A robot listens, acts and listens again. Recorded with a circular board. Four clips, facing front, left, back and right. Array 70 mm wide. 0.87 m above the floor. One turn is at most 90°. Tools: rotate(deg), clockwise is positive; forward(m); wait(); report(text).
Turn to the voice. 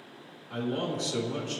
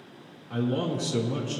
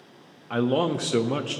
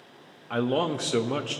rotate(90)
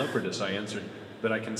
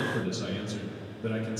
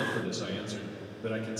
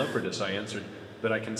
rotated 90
rotate(50)
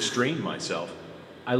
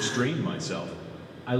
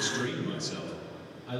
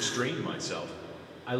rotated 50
report("Facing the man speaking.")